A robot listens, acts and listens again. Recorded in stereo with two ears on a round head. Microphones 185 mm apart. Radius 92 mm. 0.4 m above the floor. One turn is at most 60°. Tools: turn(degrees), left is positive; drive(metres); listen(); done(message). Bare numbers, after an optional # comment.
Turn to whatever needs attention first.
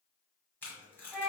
listen()
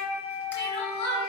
# The crying: about 50° left or 130° left.
turn(50)
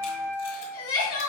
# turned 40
# So it is at 90° left.
turn(60)
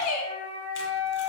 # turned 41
# The crying is now 45° left.
turn(45)
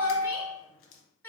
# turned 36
# The crying is now 10° left.
turn(10)
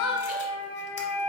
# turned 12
done("Found it: crying, straight ahead, 1 to 2 m away.")